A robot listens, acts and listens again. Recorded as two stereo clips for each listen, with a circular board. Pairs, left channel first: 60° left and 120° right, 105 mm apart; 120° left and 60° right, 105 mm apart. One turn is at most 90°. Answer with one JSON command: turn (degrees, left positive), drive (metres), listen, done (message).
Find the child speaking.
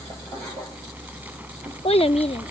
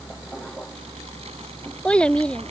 {"turn": 40}
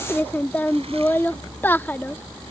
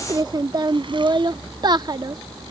{"turn": -10}
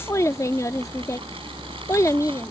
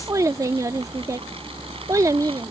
{"done": "Facing the child speaking."}